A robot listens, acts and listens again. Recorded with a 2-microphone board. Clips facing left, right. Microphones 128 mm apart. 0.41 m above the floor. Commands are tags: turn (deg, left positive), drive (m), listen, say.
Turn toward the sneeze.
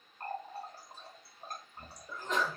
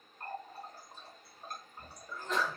<turn deg="20"/>
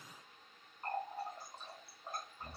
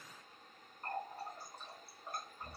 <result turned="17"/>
<listen/>
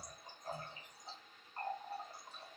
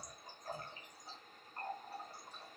<say>I heard a sneeze, but can't make it out now. It was about straight ahead or 145° left.</say>